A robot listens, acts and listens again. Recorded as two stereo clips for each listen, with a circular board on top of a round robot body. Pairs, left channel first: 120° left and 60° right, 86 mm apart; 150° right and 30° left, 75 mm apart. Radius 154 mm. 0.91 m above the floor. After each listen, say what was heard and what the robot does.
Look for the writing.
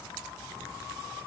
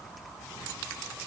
Keep listening.
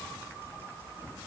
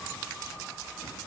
Keep listening.
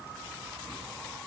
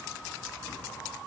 I can't make out writing.